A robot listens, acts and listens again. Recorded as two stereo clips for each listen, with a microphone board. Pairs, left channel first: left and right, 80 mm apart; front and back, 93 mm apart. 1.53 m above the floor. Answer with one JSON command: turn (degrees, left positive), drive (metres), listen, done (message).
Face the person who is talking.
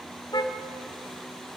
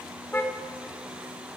{"listen": true}
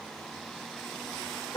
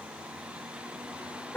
{"listen": true}
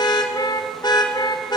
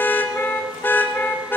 {"done": "I can't make out anyone speaking to turn to."}